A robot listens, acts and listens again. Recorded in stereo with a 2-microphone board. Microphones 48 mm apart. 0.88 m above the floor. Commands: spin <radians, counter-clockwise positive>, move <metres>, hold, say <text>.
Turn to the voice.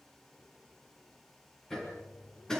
hold
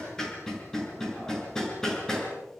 hold
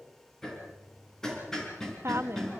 spin -1.05
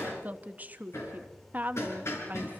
spin -0.70
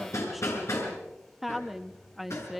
say Found it: a woman speaking, straight ahead, 1 to 2 m away.